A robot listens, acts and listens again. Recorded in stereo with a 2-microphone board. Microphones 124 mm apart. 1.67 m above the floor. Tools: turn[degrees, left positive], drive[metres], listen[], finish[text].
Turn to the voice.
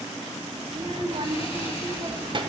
Thought: The child speaking: about 40° right or 140° right.
Action: turn[-40]
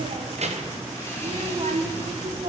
Thought: So it is at 95° right.
Action: turn[-95]
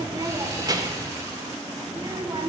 Thought: The child speaking is now 35° right.
Action: turn[-35]
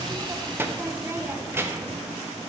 Thought: The child speaking is now 20° right.
Action: turn[-20]
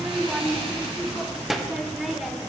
Action: finish[Found it: a child speaking, straight ahead, 1 to 2 m away.]